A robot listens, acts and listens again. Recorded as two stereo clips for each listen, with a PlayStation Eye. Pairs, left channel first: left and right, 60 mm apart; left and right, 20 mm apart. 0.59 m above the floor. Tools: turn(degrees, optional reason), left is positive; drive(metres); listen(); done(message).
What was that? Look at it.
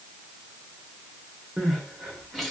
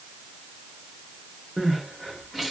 turn(degrees=30)
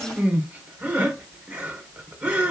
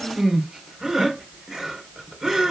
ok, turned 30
turn(degrees=-25, reason="So it is at 25° right.")
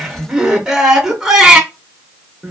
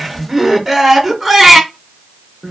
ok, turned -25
turn(degrees=-10, reason="The crying is now 10° right.")
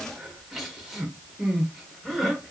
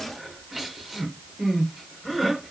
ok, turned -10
done("Facing the crying, under 1 m away.")